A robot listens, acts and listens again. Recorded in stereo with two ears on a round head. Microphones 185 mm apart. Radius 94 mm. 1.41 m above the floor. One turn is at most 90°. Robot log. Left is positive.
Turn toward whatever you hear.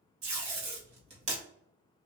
note: The tape being pulled: about 30° right or 150° right.
cmd yaw -30
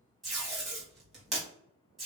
end: Found it: tape being pulled, straight ahead, 1 to 2 m away.